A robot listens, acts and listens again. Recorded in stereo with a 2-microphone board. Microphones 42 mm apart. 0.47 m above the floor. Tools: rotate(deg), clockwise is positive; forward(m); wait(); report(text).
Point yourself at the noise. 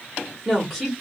rotate(30)
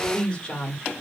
rotate(-20)
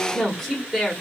report("Facing the woman speaking.")